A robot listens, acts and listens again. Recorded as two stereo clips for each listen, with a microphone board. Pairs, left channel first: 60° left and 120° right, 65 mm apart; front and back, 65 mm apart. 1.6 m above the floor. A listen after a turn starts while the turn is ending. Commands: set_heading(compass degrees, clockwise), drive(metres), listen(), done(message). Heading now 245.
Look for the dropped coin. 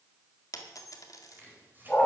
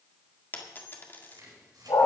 set_heading(195)
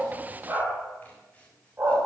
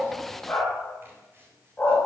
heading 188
done("Facing where the dropped coin came from. I can't hear it now.")